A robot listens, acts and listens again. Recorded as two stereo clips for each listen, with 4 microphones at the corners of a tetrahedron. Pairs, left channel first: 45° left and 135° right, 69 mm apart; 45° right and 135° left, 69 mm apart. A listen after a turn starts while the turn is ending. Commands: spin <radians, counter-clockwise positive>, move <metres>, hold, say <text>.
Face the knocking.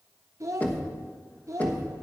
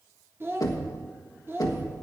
spin -0.35
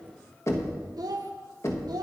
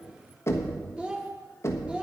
say Found it: knocking, straight ahead.